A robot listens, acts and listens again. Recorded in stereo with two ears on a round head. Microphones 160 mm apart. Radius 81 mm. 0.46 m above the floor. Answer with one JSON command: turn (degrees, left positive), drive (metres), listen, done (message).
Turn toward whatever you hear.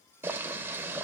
{"turn": -30}
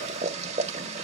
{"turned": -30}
{"turn": -135}
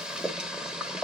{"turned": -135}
{"done": "Found it: boiling, straight ahead, 1 to 2 m away."}